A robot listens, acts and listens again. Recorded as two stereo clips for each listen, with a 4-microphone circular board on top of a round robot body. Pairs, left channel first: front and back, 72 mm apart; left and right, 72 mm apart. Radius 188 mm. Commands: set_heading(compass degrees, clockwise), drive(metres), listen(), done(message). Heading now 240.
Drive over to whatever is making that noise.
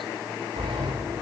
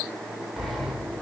set_heading(55)
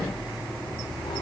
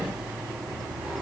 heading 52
drive(1.0)
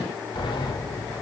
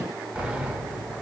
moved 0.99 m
set_heading(62)
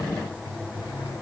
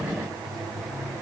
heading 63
drive(1.0)
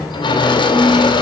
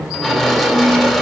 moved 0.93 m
drive(1.0)
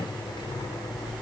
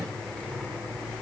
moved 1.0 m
set_heading(48)
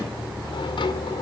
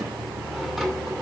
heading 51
drive(1.0)
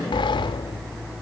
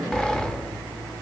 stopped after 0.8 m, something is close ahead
set_heading(41)
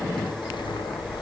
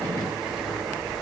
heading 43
done("Arrived at the sliding door, straight ahead.")